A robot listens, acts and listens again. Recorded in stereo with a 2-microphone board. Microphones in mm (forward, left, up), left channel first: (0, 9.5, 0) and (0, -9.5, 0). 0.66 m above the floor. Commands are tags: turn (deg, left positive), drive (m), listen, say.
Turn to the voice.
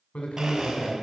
<turn deg="70"/>
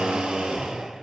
<listen/>
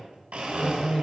<turn deg="15"/>
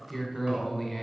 <say>Facing the man speaking.</say>